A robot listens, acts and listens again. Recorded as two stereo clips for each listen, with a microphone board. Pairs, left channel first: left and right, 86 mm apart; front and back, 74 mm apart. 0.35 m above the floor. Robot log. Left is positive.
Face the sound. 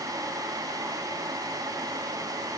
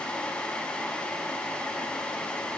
cmd idle
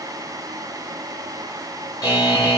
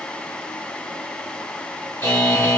note: The buzzer: 50° left.
cmd yaw +50
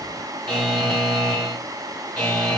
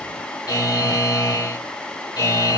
end: Found it: a buzzer, straight ahead, 2 to 4 m away.